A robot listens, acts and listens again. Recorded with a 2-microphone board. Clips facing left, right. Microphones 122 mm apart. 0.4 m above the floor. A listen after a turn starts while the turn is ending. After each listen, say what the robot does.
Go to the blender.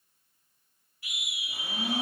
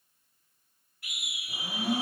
Turn 30° right.
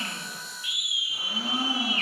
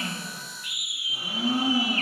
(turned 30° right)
Turn 135° right.
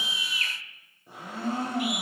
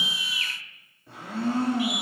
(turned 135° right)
Turn 15° left.
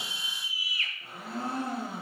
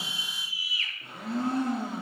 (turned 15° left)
Drive 1.0 m forward.
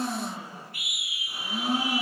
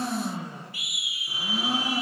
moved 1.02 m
Drive 1.0 m forward.
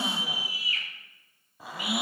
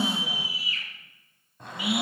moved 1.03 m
Drive 1.0 m forward.
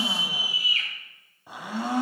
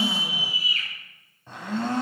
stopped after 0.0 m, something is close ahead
Turn 10° left.
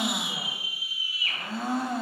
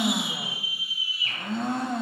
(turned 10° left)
I am next to the blender.